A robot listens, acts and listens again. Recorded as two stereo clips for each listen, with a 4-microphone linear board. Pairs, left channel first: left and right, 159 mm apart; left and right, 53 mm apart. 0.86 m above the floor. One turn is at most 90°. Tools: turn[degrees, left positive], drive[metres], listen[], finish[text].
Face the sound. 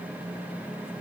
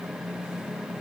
Action: listen[]
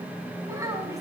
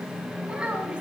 Thought: The child speaking: about 20° right or 160° right.
Action: turn[-20]
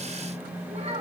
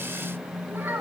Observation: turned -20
Thought: So it is at 135° right.
Action: turn[-90]
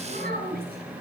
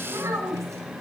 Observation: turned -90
Thought: The child speaking is now 70° right.
Action: turn[-70]
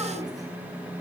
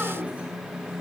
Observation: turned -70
Action: listen[]
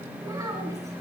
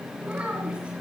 Thought: The child speaking is now 20° right.
Action: turn[-20]
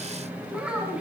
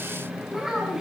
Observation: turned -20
Action: finish[Found it: a child speaking, straight ahead, over 4 m away.]